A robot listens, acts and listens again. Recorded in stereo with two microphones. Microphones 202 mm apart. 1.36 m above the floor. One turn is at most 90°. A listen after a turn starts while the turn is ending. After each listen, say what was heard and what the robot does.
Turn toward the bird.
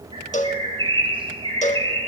The bird: about 25° right or 155° right. Turn 25° right.
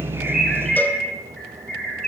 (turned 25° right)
Found it: a bird, straight ahead, over 4 m away.